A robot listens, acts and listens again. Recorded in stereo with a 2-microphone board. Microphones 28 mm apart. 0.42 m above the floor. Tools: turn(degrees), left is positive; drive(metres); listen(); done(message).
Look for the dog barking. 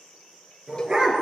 turn(degrees=-30)
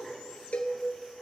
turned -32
listen()
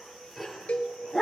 done("Found it: a dog barking, straight ahead, 2 to 4 m away.")